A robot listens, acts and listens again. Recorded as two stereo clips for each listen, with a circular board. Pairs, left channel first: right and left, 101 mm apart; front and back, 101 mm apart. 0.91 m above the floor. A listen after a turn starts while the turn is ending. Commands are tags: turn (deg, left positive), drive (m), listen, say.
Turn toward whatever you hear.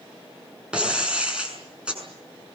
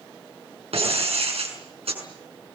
<turn deg="170"/>
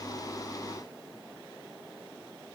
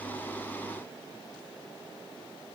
<say>Facing where the breaking glass came from. I can't hear it now.</say>